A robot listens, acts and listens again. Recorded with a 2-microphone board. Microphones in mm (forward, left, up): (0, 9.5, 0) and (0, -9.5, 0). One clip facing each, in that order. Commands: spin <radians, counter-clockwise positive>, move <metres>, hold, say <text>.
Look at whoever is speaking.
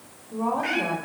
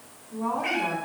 spin 0.79
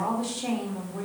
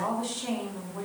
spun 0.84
say Facing the woman speaking.